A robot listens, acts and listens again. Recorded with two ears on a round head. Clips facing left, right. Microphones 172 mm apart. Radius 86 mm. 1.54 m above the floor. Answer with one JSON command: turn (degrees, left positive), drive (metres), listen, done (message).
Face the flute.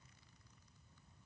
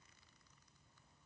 {"listen": true}
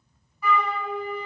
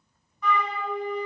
{"turn": 30}
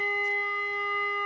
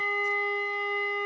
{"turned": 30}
{"turn": -25}
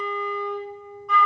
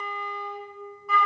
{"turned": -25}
{"done": "Found it: a flute, straight ahead."}